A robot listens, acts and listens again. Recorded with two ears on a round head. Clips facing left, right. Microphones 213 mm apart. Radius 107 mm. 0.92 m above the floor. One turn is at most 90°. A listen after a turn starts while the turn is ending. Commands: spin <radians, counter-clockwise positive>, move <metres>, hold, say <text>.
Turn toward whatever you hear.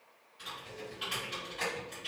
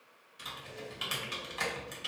spin -1.13
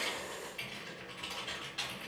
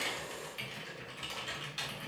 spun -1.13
spin -0.70
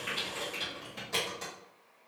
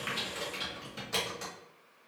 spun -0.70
say Found it: typing on a keyboard, straight ahead, 1 to 2 m away.